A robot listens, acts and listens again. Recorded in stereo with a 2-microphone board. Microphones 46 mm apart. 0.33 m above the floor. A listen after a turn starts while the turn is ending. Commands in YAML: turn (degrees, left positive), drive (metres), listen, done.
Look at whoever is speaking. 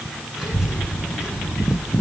turn: -20
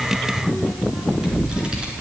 turn: -25
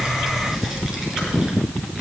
turn: -30
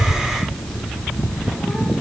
done: "Facing the child speaking."